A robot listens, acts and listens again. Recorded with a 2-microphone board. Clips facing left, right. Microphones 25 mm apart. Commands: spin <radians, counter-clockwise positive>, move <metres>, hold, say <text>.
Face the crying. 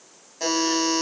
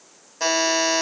hold
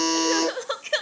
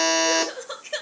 spin 0.44
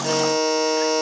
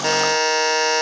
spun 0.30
hold
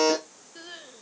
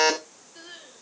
spin 0.17
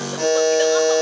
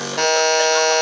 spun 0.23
hold
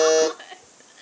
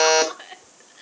say Facing the crying, under 1 m away.